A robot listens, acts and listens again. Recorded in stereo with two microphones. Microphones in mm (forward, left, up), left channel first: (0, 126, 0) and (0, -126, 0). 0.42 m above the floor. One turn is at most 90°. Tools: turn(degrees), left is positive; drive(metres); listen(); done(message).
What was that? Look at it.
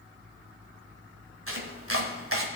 turn(degrees=-60)
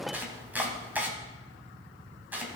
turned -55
done("Facing the chopping, 1 to 2 m away.")